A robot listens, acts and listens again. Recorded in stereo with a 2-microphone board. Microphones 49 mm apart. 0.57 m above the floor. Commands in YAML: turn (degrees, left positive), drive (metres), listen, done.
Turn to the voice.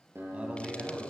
turn: -30
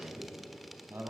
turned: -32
turn: -120
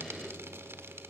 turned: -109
turn: -10
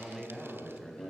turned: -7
done: "Facing the man speaking, over 4 m away."